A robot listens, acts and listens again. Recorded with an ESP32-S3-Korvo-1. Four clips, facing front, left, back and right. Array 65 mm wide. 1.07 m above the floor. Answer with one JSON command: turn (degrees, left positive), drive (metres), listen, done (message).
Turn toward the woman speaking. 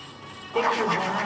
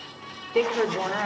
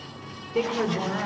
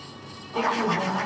{"turn": 80}
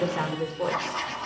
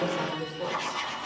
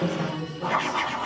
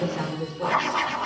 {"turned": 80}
{"done": "Found it: a woman speaking, straight ahead, 2 to 4 m away."}